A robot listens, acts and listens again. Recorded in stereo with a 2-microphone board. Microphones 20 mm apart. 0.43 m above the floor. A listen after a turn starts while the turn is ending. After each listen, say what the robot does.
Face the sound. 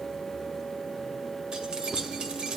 Turn 60° right.
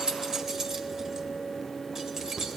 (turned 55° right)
Turn 30° right.
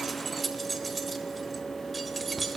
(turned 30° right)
Facing the keys jangling.